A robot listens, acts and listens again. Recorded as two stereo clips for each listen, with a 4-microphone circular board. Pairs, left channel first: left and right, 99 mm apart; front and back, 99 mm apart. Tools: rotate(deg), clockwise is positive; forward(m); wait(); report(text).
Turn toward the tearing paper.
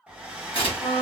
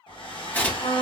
rotate(-70)
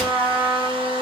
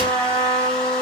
wait()
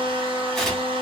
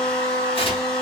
report("Facing the tearing paper, under 1 m away.")